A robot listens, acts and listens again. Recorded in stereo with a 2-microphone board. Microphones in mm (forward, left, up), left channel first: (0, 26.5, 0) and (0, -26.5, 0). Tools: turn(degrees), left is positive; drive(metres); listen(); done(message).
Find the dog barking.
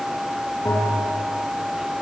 listen()
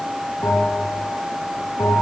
listen()
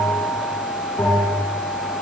done("I can't make out a dog barking to turn to.")